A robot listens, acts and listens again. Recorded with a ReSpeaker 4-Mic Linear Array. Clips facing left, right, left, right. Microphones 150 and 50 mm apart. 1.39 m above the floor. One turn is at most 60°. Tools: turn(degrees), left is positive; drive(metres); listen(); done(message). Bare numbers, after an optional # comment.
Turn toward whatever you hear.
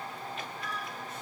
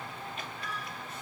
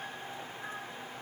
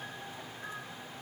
listen()
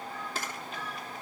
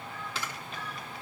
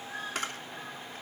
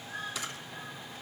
# The camera shutter: about 45° left or 135° left.
turn(45)
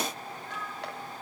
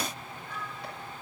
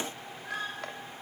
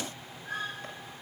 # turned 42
listen()
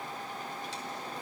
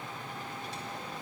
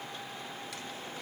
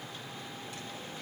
listen()
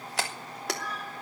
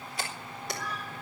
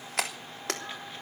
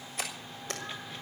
# So it is at 90° left.
turn(60)
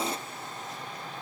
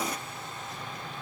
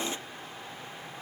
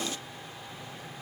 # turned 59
# Nothing new. It was at 35° left.
turn(35)
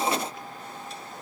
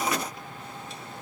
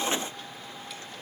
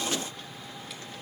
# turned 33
listen()
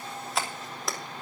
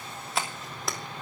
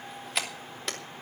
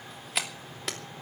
done("Facing the camera shutter.")